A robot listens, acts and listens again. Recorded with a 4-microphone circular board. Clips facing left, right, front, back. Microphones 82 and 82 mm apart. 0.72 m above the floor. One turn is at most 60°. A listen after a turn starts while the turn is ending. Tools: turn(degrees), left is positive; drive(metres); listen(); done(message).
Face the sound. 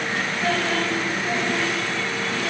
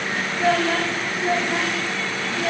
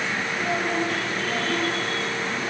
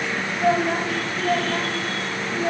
turn(degrees=-60)
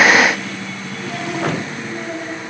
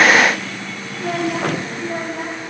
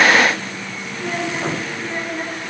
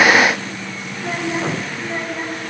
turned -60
turn(degrees=-60)
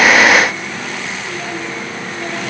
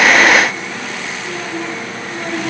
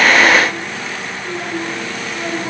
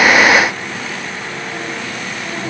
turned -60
turn(degrees=-50)
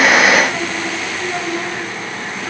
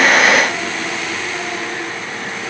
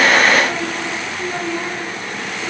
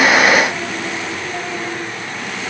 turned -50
turn(degrees=15)
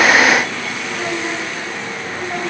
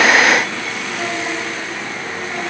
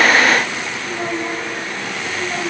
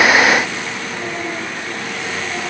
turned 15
listen()
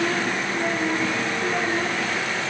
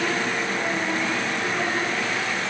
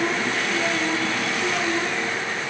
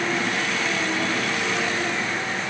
listen()
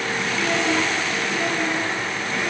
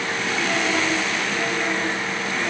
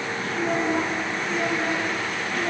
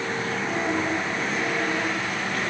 done("Facing where the child speaking came from. I can't hear it now.")